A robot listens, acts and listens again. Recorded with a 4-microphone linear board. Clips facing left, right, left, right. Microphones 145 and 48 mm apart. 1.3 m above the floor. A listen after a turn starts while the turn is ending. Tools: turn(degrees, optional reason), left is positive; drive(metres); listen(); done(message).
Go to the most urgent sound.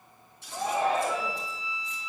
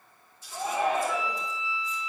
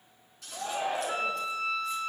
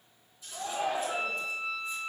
turn(degrees=35, reason="The shout: about 35° left or 145° left.")
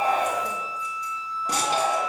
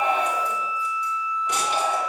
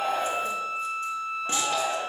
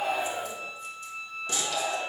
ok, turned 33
turn(degrees=115, reason="So it is at 115° left.")
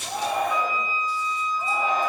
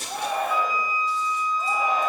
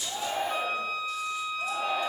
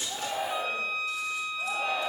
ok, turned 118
drive(metres=1.0)
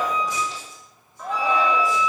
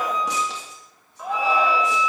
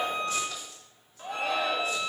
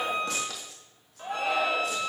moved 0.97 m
drive(metres=1.0)
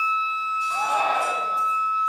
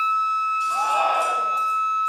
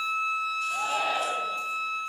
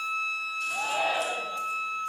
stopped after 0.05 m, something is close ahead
turn(degrees=-10, reason="The shout is now 10° right.")
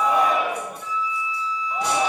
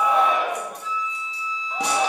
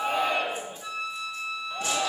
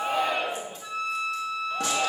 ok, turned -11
done("Arrived at the shout, straight ahead.")